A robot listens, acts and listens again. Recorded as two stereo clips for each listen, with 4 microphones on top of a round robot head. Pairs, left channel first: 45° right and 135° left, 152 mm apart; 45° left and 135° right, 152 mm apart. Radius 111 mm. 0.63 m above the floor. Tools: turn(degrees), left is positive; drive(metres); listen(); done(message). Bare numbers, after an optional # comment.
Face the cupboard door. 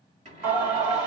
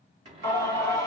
# The cupboard door: 175° left.
turn(175)
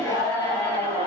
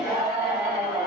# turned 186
# Nothing new. It was at 10° right.
turn(-10)
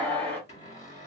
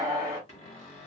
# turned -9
done("Found it: a cupboard door, straight ahead, 2 to 4 m away.")